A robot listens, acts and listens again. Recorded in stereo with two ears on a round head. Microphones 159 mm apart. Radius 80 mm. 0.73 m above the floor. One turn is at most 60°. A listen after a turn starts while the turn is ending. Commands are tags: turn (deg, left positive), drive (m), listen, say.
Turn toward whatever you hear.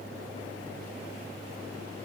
<listen/>
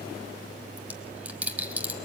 <turn deg="-30"/>
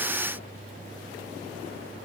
<listen/>
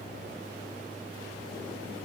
<say>I heard a dropped coin, but can't make it out now. It was about 20° left or 140° right.</say>